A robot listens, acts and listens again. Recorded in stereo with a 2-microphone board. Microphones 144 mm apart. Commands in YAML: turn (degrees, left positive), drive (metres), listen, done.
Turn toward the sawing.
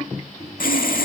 turn: 75
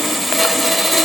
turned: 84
done: "Facing the sawing."